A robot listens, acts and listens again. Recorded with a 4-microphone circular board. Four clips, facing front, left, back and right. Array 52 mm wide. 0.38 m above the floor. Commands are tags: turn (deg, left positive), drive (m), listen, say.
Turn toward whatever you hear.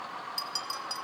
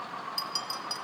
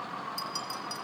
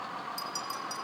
<turn deg="70"/>
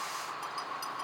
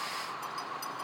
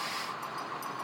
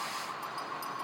<listen/>
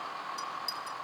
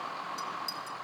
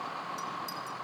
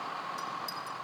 <turn deg="15"/>
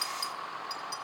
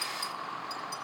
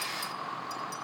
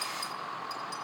<say>Found it: a clink, straight ahead, under 1 m away.</say>